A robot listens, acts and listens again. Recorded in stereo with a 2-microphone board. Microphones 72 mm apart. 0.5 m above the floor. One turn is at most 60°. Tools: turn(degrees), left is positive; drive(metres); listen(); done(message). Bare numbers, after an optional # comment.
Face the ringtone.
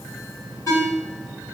# The ringtone: about 40° left or 140° left.
turn(40)
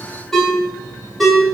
done("Facing the ringtone.")